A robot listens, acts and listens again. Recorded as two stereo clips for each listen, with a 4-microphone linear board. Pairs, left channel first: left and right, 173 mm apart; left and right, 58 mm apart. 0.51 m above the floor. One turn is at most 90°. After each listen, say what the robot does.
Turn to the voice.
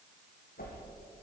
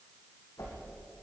Keep listening.
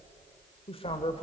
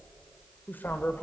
Turn 35° left.
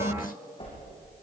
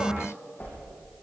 Keep listening.
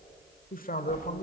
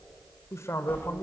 Turn 90° left.
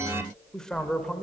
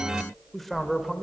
Found it: a man speaking, straight ahead, 1 to 2 m away.